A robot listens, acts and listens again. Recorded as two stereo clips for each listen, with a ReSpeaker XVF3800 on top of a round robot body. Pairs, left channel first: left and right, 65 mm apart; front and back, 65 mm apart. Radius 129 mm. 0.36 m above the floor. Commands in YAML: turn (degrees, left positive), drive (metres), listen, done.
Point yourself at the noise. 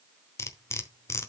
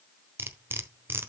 turn: 130
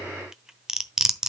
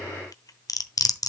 turn: -10
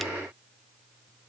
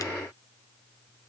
listen: true
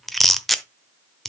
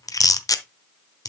done: "Found it: cutlery clinking, straight ahead, 1 to 2 m away."